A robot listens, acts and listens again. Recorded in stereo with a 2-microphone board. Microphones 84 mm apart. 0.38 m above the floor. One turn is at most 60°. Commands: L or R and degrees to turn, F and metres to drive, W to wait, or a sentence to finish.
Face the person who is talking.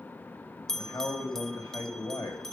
L45
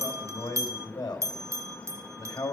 L60
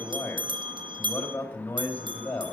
L30
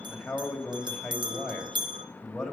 Found it: a man speaking, straight ahead.